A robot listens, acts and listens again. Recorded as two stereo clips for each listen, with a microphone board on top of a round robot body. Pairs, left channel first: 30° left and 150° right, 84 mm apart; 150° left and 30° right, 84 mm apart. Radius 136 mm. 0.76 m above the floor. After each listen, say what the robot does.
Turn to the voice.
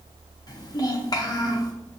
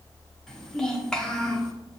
Turn 70° left.
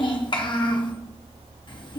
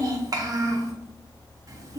Turn 15° left.
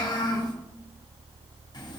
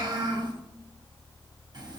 Facing the child speaking, 1 to 2 m away.